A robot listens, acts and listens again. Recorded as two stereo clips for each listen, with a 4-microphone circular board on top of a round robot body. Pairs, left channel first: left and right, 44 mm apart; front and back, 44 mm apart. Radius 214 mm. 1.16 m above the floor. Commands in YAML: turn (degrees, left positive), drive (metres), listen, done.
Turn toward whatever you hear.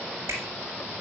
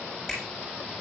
turn: -85
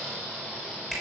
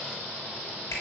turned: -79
done: "Found it: a finger snap, straight ahead."